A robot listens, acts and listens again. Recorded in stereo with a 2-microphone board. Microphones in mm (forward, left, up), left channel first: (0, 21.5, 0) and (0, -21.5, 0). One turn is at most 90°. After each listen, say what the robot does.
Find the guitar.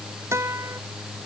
Turn 90° right.
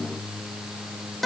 Facing the guitar.